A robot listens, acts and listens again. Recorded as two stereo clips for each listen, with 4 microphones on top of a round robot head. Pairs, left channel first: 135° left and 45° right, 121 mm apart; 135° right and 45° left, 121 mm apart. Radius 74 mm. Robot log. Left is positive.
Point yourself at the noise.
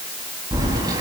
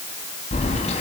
note: The keys jangling: 105° right.
cmd yaw -105
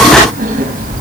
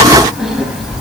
note: The keys jangling is now 45° right.
cmd yaw -45
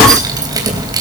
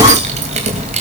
note: The keys jangling is now 15° left.
cmd yaw +15
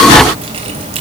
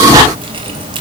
end: Facing the keys jangling.